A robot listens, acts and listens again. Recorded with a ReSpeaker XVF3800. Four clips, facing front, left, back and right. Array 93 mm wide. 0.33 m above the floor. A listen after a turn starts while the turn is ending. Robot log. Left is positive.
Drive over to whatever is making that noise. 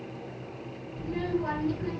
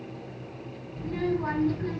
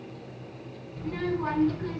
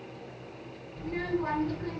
note: The child speaking: straight behind.
cmd yaw +180
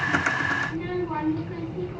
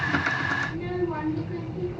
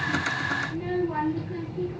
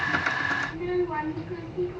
note: The child speaking is now 25° right.
cmd yaw -25
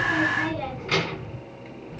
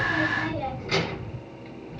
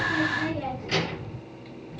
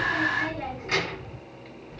note: The child speaking is now 10° right.
cmd yaw -10
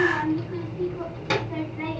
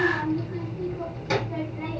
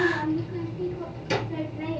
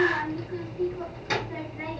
cmd fwd 1.0
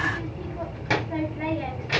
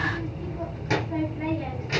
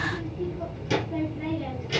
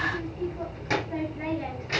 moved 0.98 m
cmd fwd 1.0
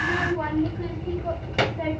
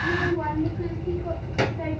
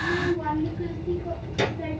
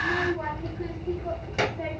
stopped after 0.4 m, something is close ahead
end: Arrived at the child speaking, straight ahead.